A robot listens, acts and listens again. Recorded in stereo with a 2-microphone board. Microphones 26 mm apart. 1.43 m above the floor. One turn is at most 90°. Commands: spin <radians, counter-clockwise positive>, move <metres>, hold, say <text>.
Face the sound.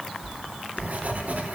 spin -1.57
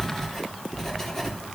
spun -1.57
spin 0.17
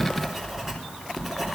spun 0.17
say Facing the writing.